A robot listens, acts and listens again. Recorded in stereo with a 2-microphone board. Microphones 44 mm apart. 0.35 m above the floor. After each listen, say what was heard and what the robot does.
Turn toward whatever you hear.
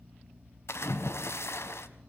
The splash: about 75° left or 105° left. Turn 75° left.
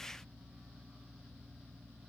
Keep listening.
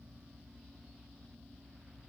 I heard a splash, but can't make it out now. It was about straight ahead or 30° left.